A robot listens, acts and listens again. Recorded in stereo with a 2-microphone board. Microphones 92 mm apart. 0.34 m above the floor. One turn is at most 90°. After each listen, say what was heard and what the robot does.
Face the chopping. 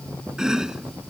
Turn 30° right.
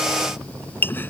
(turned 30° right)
So it is at 25° left. Turn 25° left.
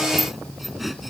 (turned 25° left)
Facing the chopping.